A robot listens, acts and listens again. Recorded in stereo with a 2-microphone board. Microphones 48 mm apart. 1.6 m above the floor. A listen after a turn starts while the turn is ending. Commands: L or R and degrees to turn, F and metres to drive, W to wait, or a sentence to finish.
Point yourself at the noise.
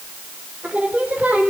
R35
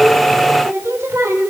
R105
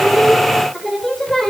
Facing the singing, over 4 m away.